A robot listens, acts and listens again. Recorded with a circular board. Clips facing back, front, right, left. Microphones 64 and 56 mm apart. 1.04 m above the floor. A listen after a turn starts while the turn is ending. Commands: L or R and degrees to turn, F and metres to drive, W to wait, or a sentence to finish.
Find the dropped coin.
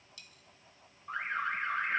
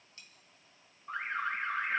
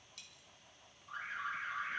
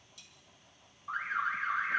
R60
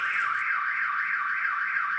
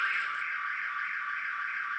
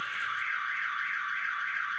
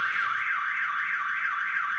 Facing where the dropped coin came from. I can't hear it now.